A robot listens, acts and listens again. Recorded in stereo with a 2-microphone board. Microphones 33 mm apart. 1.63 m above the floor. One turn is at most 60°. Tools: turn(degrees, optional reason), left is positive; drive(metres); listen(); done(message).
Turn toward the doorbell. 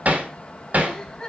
listen()
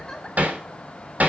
listen()
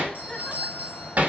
turn(degrees=-50, reason="The doorbell: about 50° right or 130° right.")
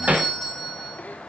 done("Facing the doorbell.")